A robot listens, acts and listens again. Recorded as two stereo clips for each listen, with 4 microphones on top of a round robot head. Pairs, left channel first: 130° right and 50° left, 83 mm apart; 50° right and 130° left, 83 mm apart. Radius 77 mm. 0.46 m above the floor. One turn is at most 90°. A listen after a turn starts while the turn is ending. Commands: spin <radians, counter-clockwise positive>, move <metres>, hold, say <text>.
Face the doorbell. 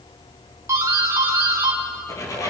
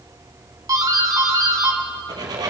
spin 1.57
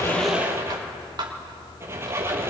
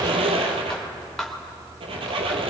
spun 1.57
spin 0.52
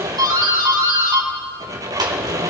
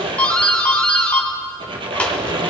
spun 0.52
spin 0.44
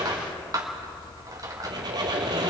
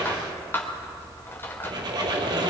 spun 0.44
spin 0.17
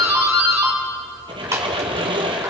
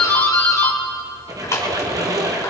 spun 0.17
say Found it: a doorbell, straight ahead.